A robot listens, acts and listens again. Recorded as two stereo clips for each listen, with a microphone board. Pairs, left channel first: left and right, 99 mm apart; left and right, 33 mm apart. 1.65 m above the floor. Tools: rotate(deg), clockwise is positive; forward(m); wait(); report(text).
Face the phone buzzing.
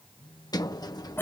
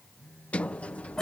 rotate(-55)
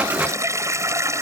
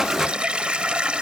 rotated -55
wait()
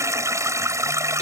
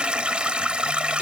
wait()
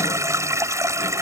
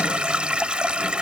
report("I heard a phone buzzing, but can't make it out now. It was about straight ahead or 70° left.")